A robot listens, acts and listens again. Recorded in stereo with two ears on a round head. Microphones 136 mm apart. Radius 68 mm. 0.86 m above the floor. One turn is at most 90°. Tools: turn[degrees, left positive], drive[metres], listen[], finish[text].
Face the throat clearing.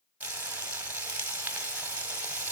Action: listen[]
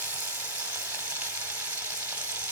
Action: listen[]
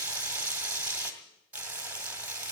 Action: finish[I can't make out throat clearing to turn to.]